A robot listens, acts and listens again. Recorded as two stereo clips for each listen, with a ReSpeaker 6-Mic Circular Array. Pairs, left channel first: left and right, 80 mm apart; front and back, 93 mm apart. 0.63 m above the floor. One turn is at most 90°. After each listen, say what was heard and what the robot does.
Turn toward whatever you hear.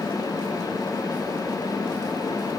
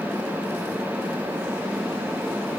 Keep listening.
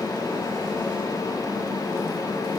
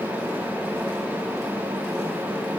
Keep listening.
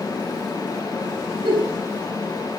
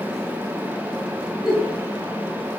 The giggle: 95° right. Turn 90° right.
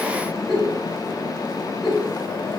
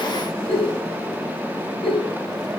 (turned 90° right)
Found it: a giggle, straight ahead.